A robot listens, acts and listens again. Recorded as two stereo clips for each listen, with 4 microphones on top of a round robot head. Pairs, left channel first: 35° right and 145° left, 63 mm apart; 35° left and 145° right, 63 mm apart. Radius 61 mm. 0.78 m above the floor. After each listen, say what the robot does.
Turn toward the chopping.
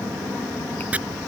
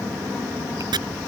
Turn 150° right.
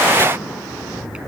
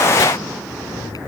Keep listening.
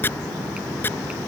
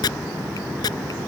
Turn 25° left.
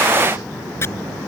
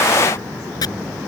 Turn 15° left.
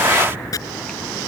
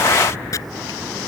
Facing the chopping.